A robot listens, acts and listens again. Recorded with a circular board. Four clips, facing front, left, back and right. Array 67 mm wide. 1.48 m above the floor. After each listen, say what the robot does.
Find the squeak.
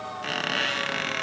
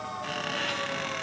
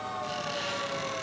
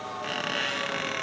Turn 15° right.
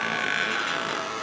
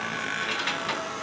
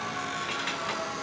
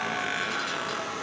Facing the squeak.